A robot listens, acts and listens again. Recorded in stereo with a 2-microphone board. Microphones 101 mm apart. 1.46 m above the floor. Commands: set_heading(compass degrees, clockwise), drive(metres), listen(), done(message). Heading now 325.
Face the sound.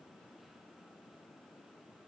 listen()
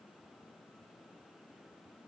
listen()
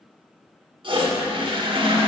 set_heading(20)
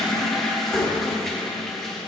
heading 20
done("Facing the toilet flushing, 1 to 2 m away.")